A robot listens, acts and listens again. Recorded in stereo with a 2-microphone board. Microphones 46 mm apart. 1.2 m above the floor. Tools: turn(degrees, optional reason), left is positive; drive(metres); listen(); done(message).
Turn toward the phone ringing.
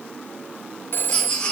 turn(degrees=55, reason="The phone ringing: about 55° left or 125° left.")
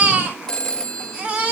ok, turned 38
turn(degrees=15, reason="So it is at 15° left.")
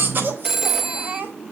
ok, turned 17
done("Found it: a phone ringing, straight ahead.")